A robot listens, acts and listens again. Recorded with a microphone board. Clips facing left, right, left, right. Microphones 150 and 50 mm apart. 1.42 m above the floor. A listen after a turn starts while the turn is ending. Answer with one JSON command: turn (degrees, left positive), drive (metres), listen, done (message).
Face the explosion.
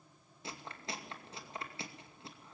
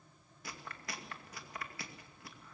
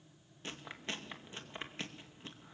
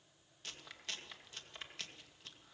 {"listen": true}
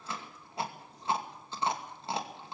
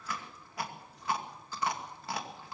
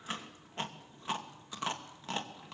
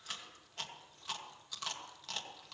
{"listen": true}
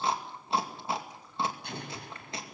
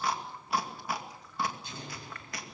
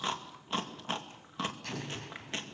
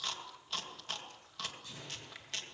{"turn": 65}
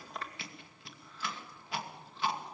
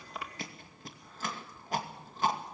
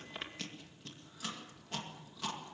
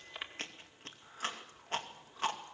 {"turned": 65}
{"listen": true}
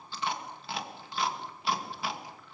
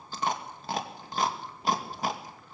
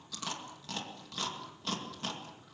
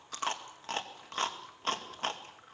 {"done": "I heard an explosion, but can't make it out now. It was about straight ahead or 50° left."}